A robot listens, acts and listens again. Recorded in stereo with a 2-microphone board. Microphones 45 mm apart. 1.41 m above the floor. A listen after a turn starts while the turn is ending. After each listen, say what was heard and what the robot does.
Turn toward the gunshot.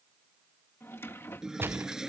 The gunshot: about 60° right or 120° right. Turn 60° right.
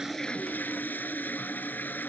Keep listening.
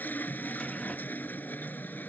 I heard a gunshot, but can't make it out now. It was about straight ahead or 60° right.